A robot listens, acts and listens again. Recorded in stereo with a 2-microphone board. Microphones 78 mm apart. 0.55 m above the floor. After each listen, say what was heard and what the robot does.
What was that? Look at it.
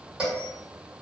Turn 30° right.
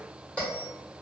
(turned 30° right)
So it is at 15° left. Turn 15° left.
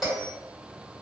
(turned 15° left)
Facing the bell, 1 to 2 m away.